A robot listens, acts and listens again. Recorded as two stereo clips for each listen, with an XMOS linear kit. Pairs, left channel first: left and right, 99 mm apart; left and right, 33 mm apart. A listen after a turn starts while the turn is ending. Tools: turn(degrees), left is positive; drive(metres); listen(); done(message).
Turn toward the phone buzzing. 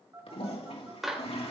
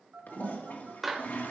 turn(degrees=-30)
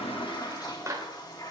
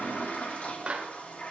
listen()
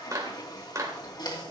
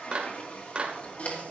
listen()
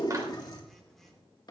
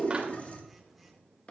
done("Found it: a phone buzzing, straight ahead, 2 to 4 m away.")